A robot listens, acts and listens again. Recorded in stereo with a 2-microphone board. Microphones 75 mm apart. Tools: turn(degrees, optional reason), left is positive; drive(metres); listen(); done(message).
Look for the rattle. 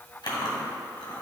listen()
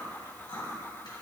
listen()
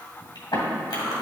done("I can't make out a rattle to turn to.")